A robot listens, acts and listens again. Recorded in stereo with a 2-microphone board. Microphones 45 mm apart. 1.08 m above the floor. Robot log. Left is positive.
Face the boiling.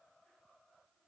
cmd idle
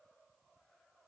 cmd idle
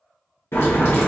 note: The boiling: about 70° left or 110° left.
cmd yaw +70
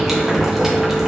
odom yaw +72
end: Found it: boiling, straight ahead, under 1 m away.